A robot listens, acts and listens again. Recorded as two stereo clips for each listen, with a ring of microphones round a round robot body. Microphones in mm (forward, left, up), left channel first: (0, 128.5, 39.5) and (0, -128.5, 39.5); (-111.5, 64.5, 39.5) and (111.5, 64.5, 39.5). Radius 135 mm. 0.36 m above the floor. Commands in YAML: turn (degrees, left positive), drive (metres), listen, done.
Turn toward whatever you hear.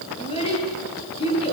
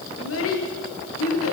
turn: 160
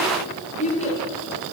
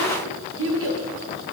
turn: 25
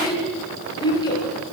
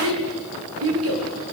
turn: 15
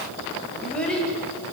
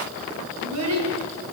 done: "Facing the child speaking, over 4 m away."